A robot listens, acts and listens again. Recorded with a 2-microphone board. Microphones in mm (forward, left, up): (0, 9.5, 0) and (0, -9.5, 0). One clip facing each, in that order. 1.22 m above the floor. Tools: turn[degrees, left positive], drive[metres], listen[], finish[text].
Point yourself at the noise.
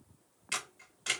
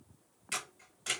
Thought: The camera shutter: about 20° left or 160° left.
Action: turn[20]
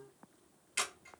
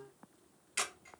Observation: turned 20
Action: finish[Facing the camera shutter.]